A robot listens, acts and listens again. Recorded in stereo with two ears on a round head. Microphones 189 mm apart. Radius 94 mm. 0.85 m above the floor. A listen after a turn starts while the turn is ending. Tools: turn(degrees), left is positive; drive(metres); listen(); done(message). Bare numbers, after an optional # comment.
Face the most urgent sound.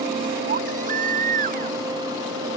# The baby crying: about 35° right or 145° right.
turn(-35)
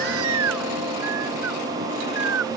# So it is at 110° right.
turn(-110)
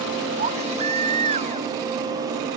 # The baby crying is now 30° right.
turn(-30)
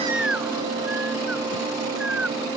done("Facing the baby crying.")